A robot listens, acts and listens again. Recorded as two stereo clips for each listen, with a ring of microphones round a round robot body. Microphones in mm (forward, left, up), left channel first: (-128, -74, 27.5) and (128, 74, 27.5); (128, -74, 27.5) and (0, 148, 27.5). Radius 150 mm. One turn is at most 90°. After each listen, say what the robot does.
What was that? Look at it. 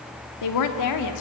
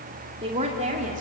Turn 90° right.
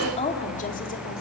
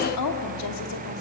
Turn 80° right.
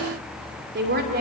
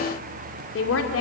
Turn 30° right.
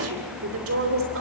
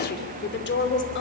Turn 15° right.
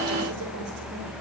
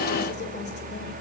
Keep listening.
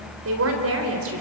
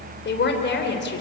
Turn 15° right.
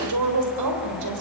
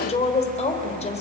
Found it: a woman speaking, straight ahead, 2 to 4 m away.